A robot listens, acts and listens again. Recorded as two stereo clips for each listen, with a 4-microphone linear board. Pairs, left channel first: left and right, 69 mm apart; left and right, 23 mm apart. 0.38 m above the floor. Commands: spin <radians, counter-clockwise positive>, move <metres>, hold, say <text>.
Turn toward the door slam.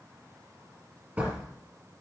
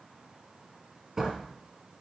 spin -0.35
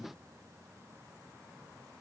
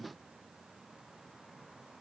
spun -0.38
hold
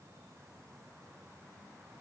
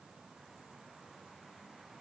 say I heard a door slam, but can't make it out now. It was about 5° left or 140° right.